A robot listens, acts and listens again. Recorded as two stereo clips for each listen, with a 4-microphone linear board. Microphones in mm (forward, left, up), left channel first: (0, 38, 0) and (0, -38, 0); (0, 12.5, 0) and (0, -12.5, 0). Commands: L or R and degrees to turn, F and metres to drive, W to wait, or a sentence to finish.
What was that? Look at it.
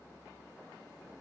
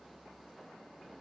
W
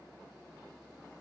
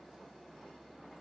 W
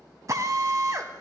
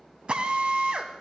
R45
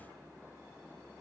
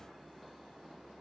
W
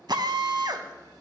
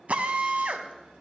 R85
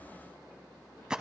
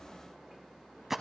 R10
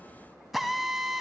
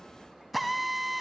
Facing the drill.